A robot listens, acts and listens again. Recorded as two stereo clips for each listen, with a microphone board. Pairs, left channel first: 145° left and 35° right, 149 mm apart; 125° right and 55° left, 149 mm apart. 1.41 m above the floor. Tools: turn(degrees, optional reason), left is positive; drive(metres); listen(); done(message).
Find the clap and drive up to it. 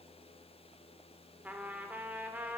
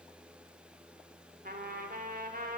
listen()
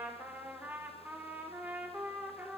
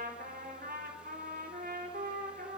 listen()
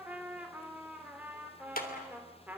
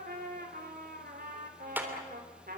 turn(degrees=135, reason="The clap: 135° left.")
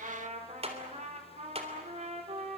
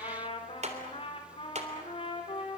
turn(degrees=15, reason="The clap is now 15° left.")
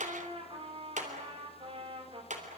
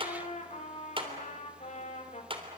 drive(metres=1.0)
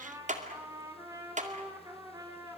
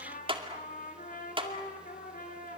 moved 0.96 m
drive(metres=1.0)
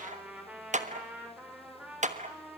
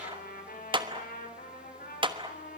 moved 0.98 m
drive(metres=1.0)
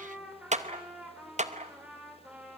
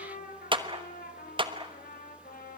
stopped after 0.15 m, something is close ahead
done("I am next to the clap.")